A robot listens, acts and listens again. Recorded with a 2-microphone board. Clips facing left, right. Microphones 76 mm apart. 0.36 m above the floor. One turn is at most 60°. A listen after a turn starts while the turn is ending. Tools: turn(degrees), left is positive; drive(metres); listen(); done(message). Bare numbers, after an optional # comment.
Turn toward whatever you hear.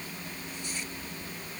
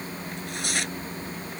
turn(-60)
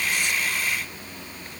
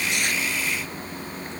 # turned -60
# Nothing new. It was at 30° right.
turn(-30)
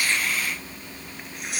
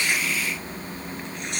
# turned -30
done("Facing the tearing paper.")